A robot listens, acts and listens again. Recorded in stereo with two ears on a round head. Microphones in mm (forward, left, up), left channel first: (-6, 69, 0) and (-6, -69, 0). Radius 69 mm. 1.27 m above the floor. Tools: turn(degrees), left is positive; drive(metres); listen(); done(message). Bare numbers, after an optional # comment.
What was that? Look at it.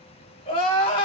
# The crying: about 40° left or 140° left.
turn(40)
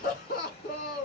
# So it is at 90° left.
turn(90)
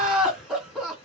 done("Found it: crying, straight ahead.")